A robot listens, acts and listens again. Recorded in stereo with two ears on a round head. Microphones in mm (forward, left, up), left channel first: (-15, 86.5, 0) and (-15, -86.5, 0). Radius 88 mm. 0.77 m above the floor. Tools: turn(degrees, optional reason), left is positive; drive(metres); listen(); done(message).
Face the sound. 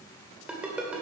turn(degrees=-30)
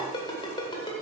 turn(degrees=25, reason="So it is at 25° left.")
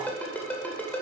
turn(degrees=10, reason="The ringtone is now 10° left.")
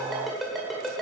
done("Facing the ringtone.")